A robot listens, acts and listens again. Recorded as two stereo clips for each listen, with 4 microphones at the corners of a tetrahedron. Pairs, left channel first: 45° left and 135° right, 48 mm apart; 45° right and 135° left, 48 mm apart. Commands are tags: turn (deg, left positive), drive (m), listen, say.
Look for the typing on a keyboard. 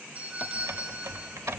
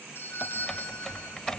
<turn deg="-120"/>
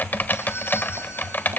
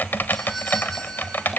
<say>Facing the typing on a keyboard.</say>